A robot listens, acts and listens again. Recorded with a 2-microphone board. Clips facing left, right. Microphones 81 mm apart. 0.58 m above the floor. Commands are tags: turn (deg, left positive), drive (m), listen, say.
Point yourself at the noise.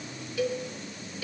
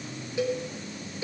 <turn deg="-25"/>
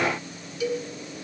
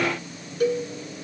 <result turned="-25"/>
<turn deg="-135"/>
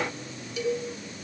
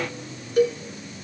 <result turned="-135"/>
<turn deg="-45"/>
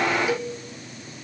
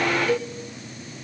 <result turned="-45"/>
<turn deg="15"/>
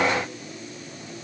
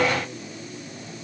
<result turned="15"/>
<listen/>
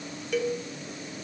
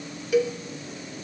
<say>Facing the cowbell, 2 to 4 m away.</say>